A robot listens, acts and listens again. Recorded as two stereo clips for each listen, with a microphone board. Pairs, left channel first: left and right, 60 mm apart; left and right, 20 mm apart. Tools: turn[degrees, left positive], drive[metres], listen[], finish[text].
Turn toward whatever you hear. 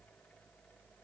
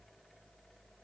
Action: listen[]
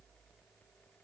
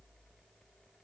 Action: listen[]
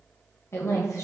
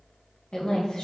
Thought: The woman speaking: about 55° left or 125° left.
Action: turn[55]
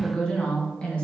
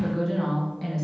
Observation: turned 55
Thought: So it is at 20° left.
Action: turn[20]
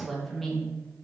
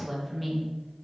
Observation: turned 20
Action: finish[Facing the woman speaking.]